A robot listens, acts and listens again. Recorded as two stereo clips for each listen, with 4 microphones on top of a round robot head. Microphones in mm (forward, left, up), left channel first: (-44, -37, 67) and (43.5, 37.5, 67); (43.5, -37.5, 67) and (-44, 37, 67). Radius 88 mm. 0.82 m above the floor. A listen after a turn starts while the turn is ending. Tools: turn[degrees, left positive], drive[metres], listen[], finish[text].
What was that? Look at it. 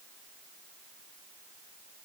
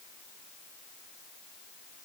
Action: listen[]
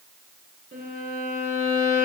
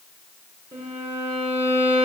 Thought: The violin: 70° left.
Action: turn[70]
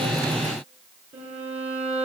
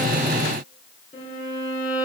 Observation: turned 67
Action: finish[Facing the violin.]